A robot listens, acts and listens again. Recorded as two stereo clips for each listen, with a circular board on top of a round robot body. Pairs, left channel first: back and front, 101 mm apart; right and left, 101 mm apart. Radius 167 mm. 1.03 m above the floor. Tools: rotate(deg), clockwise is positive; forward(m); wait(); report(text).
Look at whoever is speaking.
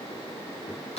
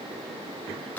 wait()
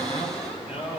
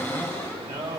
rotate(-155)
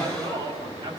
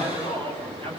rotate(-55)
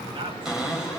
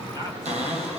rotate(-40)
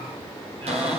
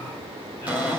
wait()
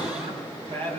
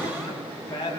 rotate(30)
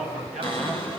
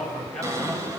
rotate(10)
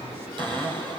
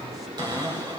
wait()
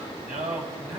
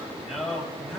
report("Found it: a man speaking, straight ahead.")